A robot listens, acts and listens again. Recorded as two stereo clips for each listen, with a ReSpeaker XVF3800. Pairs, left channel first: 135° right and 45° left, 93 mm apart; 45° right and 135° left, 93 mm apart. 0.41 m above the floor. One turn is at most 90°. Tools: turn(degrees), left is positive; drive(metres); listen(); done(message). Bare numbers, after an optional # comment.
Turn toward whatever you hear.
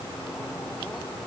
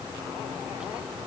listen()
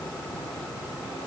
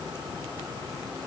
listen()
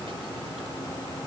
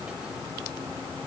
done("I can't make out anything to turn to.")